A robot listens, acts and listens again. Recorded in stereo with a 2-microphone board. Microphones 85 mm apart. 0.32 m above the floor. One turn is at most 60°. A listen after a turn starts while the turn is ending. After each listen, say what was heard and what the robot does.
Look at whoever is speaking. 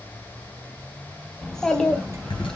Turn 30° left.
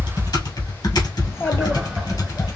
So it is at 145° left. Turn 60° left.
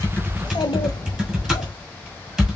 The child speaking is now 90° left. Turn 60° left.
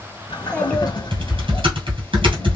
The child speaking is now 15° left. Turn 15° left.
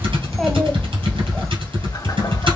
Found it: a child speaking, straight ahead, 1 to 2 m away.